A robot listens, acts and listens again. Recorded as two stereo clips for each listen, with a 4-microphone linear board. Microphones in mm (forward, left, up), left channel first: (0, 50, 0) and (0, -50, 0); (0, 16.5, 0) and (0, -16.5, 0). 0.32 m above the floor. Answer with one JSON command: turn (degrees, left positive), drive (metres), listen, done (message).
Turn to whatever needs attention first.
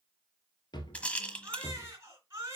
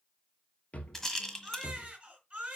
{"turn": -30}
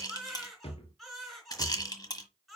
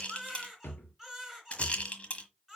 {"done": "Facing the baby crying."}